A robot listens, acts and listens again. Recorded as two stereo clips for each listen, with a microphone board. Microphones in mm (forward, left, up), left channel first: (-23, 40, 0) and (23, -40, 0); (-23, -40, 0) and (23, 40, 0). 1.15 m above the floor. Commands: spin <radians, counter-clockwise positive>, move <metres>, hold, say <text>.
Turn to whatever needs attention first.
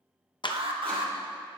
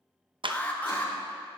spin -0.79
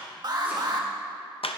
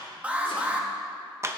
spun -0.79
spin -0.26
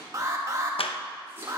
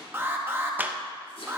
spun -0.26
say Facing the alarm, 1 to 2 m away.